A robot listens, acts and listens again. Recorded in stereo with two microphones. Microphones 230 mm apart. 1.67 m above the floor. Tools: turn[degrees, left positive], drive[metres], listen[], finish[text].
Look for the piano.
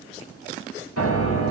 Action: turn[90]
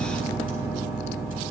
Thought: So it is at 10° right.
Action: turn[-10]
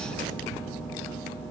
Action: finish[Facing the piano, 2 to 4 m away.]